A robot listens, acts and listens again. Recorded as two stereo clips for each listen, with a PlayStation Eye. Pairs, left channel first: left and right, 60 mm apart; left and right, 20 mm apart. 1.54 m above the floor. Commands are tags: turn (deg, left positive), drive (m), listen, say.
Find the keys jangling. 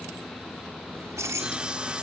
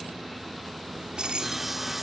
<turn deg="-60"/>
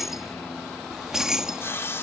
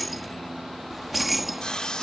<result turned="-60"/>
<turn deg="-10"/>
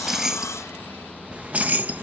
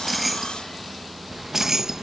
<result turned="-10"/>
<turn deg="-35"/>
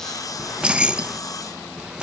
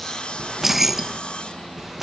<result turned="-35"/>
<turn deg="-20"/>
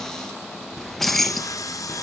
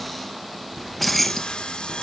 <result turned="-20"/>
<say>Found it: keys jangling, straight ahead.</say>